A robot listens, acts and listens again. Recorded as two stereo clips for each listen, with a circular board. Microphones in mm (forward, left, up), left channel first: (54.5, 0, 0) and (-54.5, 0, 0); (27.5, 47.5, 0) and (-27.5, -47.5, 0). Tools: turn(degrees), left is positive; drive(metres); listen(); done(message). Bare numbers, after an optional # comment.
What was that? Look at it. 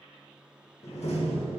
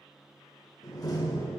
done("Facing the door slam.")